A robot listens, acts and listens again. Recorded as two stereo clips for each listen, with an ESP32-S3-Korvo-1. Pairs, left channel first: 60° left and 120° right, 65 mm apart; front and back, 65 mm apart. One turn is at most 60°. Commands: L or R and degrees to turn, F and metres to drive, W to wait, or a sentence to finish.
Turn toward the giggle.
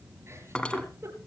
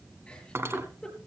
R60
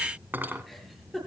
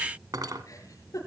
R25
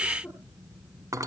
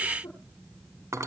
Facing the giggle, over 4 m away.